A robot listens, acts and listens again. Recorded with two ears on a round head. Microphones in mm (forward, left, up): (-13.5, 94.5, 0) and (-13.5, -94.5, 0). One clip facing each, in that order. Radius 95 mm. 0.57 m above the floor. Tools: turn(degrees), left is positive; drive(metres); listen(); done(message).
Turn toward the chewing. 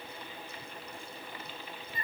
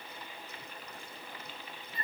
listen()
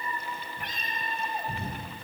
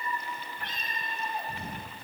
listen()
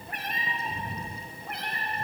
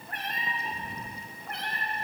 done("I can't make out chewing to turn to.")